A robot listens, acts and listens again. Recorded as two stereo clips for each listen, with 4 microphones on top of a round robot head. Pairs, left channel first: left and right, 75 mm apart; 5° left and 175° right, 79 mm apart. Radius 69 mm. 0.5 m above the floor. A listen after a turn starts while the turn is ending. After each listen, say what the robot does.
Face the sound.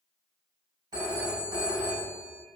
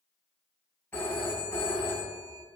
Turn 65° right.
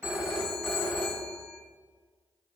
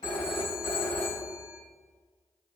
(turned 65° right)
Found it: a phone ringing, straight ahead.